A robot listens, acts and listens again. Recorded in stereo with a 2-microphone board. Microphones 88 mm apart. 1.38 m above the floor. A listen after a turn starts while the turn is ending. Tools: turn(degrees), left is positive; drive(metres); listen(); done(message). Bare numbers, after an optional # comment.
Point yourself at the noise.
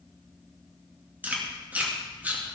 # The chewing: about 20° right or 160° right.
turn(-20)
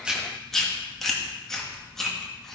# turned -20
done("Facing the chewing.")